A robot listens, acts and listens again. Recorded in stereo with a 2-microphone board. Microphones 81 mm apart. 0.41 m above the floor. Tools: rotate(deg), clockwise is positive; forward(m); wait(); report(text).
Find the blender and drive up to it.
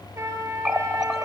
wait()
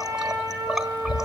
wait()
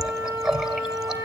report("I can't make out a blender, only a running tap and a trumpet.")